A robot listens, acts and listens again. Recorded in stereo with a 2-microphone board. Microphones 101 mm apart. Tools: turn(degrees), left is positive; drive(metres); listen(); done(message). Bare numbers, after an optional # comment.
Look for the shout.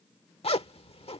listen()
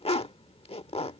listen()
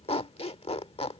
done("I can't make out a shout, only a zipper.")